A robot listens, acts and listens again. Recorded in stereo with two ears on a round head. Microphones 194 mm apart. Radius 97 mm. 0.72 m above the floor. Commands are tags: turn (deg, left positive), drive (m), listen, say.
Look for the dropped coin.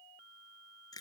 <listen/>
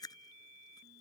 <listen/>
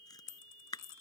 <turn deg="65"/>
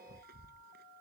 <listen/>
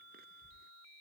<say>I heard a dropped coin, but can't make it out now. It was about straight ahead or 50° left.</say>